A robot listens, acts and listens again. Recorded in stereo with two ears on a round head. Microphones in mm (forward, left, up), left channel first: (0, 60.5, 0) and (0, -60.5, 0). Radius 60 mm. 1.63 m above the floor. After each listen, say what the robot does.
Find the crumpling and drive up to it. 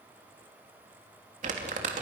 Turn 60° right.
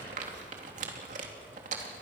Turn 60° right.
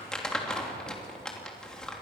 Drive 1.0 m forward.
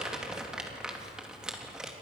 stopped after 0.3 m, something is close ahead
Blocked. The crumpling is further on, straight ahead.